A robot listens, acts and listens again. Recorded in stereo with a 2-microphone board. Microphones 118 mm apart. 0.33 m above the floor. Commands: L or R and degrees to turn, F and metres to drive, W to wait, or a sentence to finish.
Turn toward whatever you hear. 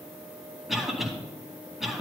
L30
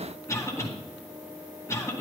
L155
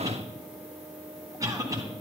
R30
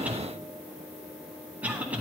R15
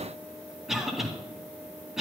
Found it: a cough, straight ahead, 2 to 4 m away.